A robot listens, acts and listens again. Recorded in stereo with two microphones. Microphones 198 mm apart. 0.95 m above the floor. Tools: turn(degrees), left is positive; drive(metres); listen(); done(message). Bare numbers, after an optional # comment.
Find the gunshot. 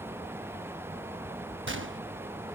turn(-90)
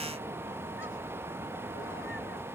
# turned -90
done("I heard a gunshot from this way, but can't make it out now.")